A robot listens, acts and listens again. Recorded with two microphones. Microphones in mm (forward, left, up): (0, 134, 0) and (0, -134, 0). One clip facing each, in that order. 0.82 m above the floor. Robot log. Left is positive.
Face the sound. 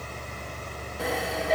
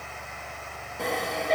cmd yaw +30
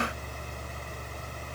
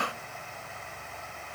cmd idle
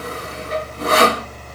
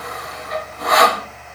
note: So it is at 150° left.
cmd yaw +150
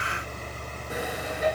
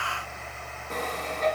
note: The sawing is now 10° left.
cmd yaw +10
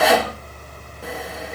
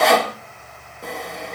end: Found it: sawing, straight ahead, 1 to 2 m away.